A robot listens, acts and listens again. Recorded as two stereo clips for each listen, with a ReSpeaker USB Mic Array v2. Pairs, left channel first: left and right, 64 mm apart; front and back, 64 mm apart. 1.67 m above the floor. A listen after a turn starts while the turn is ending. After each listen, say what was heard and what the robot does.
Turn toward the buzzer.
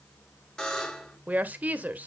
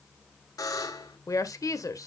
The buzzer: 10° left. Turn 10° left.
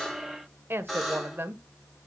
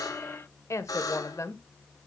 Facing the buzzer, 2 to 4 m away.